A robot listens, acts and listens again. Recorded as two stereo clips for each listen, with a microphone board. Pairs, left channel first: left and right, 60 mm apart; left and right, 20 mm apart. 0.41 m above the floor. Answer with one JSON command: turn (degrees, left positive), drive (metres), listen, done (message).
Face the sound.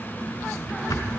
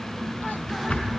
{"turn": 75}
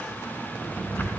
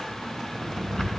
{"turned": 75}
{"turn": 30}
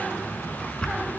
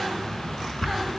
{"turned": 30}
{"turn": 15}
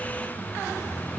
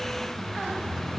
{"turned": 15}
{"listen": true}
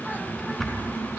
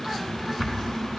{"done": "Facing the drawer, 2 to 4 m away."}